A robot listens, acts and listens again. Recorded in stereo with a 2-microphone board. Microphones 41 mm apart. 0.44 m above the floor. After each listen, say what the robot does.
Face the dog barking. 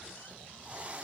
Keep listening.
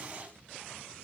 Keep listening.
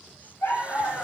Turn 90° left.
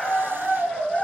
Turn 15° left.
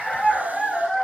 Found it: a dog barking, straight ahead.